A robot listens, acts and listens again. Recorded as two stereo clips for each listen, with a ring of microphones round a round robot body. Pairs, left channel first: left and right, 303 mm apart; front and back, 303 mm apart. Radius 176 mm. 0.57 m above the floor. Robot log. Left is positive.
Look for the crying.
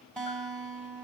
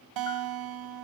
cmd idle
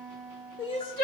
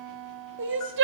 note: The crying: 135° left.
cmd yaw +135
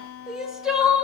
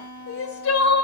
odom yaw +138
end: Facing the crying, 1 to 2 m away.